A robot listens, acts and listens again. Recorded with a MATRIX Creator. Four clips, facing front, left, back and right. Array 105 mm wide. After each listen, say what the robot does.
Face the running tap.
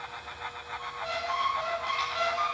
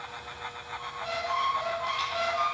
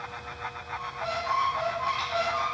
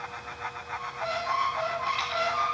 Keep listening.
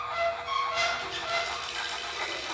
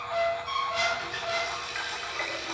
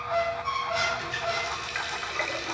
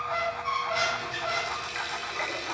Turn 180° left.
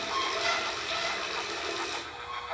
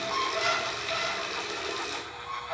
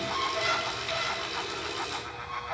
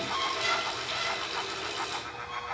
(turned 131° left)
Turn 50° left.
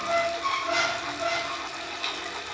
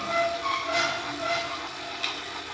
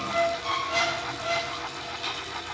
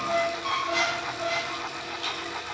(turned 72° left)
Turn 25° right.
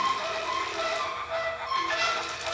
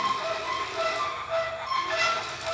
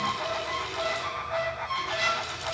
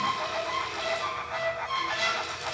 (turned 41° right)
Turn 15° left.
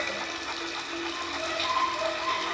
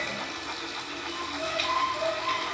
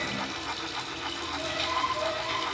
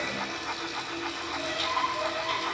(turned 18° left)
Facing the running tap, 1 to 2 m away.